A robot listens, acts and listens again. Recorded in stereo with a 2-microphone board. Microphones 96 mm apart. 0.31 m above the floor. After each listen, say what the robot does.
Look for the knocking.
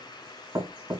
Turn 35° right.
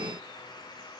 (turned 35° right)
Keep listening.
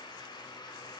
Keep listening.
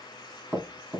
Facing the knocking, 2 to 4 m away.